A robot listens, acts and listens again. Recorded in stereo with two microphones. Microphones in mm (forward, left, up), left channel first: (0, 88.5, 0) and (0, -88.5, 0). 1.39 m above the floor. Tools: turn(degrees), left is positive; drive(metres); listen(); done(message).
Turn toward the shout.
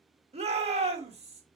turn(degrees=-35)
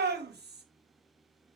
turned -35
turn(degrees=-110)
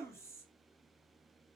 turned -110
turn(degrees=15)
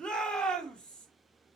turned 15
done("Facing the shout, 2 to 4 m away.")